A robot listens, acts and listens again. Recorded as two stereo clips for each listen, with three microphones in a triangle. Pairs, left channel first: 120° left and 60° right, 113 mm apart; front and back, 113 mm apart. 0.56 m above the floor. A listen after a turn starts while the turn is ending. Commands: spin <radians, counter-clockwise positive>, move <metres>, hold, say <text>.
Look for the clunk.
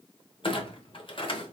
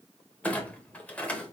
spin 1.31
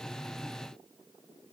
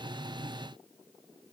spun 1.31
say I heard a clunk from this way, but can't make it out now.